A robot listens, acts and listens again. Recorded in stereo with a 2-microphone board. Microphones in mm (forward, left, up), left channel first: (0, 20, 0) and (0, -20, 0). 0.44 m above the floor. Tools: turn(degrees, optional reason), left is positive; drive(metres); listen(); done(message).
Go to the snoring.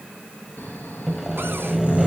turn(degrees=45, reason="The snoring: about 45° left or 135° left.")
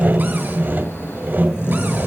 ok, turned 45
turn(degrees=90, reason="So it is at 90° left.")
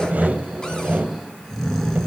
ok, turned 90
turn(degrees=15, reason="The snoring is now 15° left.")
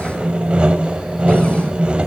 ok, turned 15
listen()
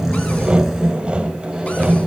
drive(metres=1.0)
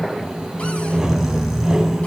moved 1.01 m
drive(metres=1.0)
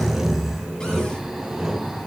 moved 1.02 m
drive(metres=1.0)
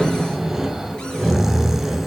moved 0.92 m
drive(metres=1.0)
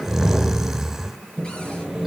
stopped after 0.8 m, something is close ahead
turn(degrees=-10, reason="The snoring is now 10° right.")
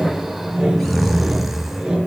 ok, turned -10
done("I am next to the snoring.")